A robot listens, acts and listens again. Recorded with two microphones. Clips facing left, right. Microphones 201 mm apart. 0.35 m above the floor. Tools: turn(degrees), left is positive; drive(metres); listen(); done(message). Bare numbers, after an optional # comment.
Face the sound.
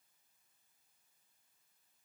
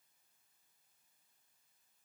listen()
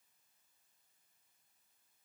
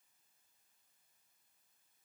listen()
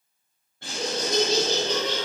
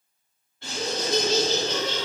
# The laughter: about 50° left or 130° left.
turn(50)
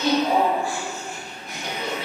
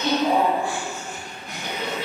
done("Facing the laughter.")